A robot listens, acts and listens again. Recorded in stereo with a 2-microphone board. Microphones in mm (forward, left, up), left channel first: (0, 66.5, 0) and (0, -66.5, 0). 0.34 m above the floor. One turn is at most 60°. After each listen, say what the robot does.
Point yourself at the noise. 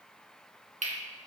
Turn 60° right.
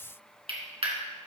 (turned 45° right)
Turn 50° right.
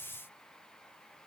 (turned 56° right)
Keep listening.
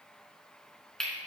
Found it: cutlery clinking, straight ahead, 2 to 4 m away.